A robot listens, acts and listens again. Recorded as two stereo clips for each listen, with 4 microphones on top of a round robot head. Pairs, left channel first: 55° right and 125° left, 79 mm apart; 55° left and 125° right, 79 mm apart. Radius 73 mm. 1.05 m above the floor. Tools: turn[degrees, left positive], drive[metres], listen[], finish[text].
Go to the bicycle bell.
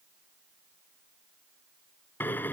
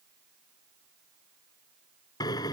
Action: listen[]
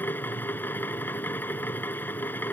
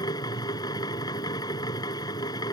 Action: listen[]
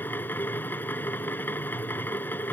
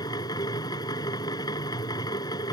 Action: finish[I can't make out a bicycle bell, only a drill.]